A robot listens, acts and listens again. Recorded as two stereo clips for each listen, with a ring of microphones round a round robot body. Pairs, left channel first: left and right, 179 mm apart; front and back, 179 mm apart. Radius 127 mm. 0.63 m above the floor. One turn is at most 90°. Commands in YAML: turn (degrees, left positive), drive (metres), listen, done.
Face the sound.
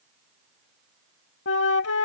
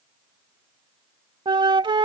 turn: 90
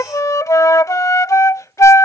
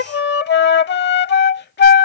turn: 15
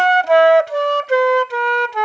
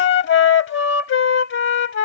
done: "Facing the flute."